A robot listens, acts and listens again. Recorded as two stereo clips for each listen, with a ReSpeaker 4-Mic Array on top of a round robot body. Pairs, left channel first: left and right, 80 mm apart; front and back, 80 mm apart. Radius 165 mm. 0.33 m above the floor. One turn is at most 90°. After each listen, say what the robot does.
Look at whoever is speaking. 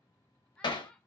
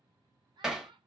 Turn 90° left.
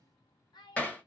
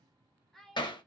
Turn 85° left.
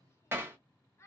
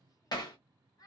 Turn 40° left.
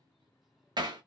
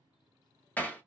Keep listening.
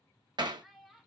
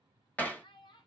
Found it: a child speaking, straight ahead, under 1 m away.